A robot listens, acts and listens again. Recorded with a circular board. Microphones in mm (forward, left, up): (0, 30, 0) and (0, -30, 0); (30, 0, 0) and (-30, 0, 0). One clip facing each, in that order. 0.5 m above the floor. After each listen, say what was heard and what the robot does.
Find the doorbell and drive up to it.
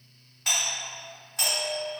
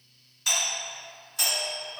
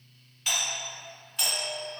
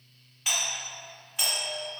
The doorbell: 110° left. Turn 110° left.
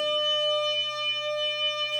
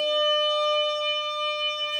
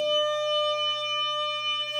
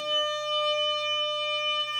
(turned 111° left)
Keep listening.
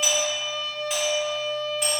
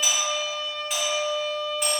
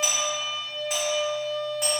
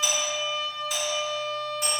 Drive 1.0 m forward.
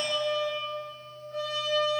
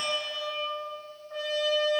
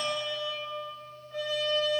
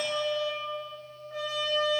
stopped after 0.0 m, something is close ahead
Keep listening.
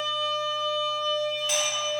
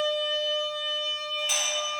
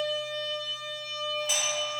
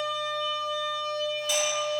Keep listening.
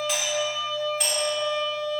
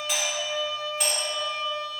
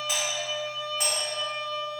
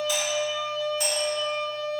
Blocked. The doorbell is further on, straight ahead.